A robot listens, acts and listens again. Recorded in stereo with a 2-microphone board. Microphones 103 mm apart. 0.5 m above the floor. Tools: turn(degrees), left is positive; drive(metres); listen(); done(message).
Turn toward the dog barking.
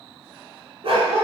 turn(degrees=-70)
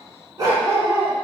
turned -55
turn(degrees=-30)
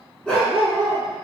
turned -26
turn(degrees=10)
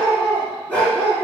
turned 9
turn(degrees=20)
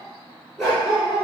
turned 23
done("Facing the dog barking, 2 to 4 m away.")